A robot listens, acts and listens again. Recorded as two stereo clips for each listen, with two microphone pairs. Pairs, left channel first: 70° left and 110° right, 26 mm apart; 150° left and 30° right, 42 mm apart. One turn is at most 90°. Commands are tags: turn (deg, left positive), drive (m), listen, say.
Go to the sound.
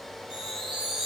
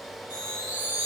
<turn deg="-50"/>
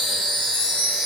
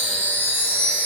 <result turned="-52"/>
<drive m="1.0"/>
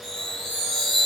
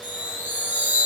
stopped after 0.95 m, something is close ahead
<say>I am next to the chime.</say>